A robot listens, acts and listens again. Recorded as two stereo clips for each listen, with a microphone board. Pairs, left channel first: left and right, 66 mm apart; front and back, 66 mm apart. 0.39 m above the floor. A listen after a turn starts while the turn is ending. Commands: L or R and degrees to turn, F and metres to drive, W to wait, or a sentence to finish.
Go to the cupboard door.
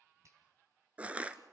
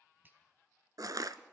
W
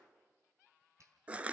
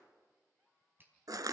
W
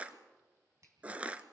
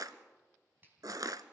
I can't make out a cupboard door, only crushing and a finger snap.